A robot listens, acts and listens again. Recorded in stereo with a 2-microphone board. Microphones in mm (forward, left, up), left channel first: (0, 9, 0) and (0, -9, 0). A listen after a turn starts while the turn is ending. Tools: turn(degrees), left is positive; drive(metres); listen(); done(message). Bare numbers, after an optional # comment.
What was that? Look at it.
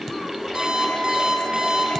# The alarm clock: about 35° right or 145° right.
turn(-35)
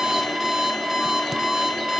done("Found it: an alarm clock, straight ahead, over 4 m away.")